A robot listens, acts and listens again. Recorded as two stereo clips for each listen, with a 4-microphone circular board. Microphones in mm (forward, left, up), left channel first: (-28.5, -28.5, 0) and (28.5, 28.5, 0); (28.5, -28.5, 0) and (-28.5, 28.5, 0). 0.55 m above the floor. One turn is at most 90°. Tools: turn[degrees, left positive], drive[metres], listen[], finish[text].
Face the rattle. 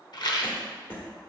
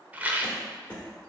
Thought: The rattle: 160° right.
Action: turn[-90]
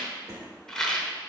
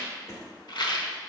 Thought: The rattle is now 55° right.
Action: turn[-55]
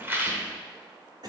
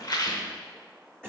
Thought: The rattle is now 15° right.
Action: turn[-15]
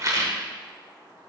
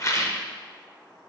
Action: finish[Found it: a rattle, straight ahead, 1 to 2 m away.]